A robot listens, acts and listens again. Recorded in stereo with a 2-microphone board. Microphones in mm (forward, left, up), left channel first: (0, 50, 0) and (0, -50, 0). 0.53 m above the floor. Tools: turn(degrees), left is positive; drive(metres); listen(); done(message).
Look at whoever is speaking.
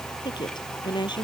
turn(degrees=45)
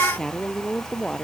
done("Facing the woman speaking.")